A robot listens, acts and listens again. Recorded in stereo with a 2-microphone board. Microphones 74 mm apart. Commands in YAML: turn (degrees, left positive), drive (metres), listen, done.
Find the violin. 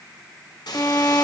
turn: 35
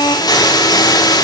turn: 110
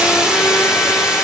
listen: true
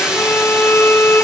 turn: 30
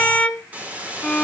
turn: 20
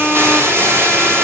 done: "Found it: a violin, straight ahead."